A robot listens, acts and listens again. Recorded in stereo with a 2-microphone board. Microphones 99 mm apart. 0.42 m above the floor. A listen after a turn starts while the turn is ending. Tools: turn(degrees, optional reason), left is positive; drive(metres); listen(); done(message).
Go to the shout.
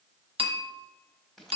listen()
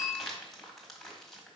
listen()
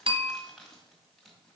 done("I can't make out a shout, only crumpling and a bell.")